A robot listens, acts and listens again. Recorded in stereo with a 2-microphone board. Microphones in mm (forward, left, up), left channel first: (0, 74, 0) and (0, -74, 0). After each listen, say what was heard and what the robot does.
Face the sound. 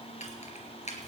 The keys jangling: about 50° left or 130° left. Turn 50° left.
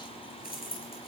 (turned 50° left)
So it is at 85° left. Turn 85° left.
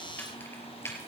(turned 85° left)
The keys jangling is now 20° left. Turn 20° left.
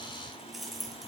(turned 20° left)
Facing the keys jangling.